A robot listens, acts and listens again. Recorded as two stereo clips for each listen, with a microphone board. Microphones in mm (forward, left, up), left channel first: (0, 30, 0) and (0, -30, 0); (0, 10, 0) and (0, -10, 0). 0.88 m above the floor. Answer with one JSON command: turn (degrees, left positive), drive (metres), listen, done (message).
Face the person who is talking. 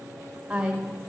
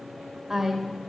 {"turn": -30}
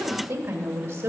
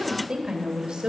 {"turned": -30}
{"turn": -135}
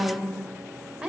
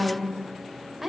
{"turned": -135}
{"turn": -25}
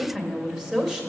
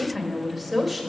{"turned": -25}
{"turn": -10}
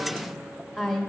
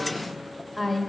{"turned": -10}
{"done": "Facing the woman speaking."}